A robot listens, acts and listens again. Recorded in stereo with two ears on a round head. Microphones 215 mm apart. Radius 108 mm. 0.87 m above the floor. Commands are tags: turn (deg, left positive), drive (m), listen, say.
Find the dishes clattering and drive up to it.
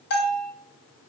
<listen/>
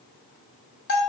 <listen/>
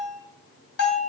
<say>I can't make out dishes clattering to turn to.</say>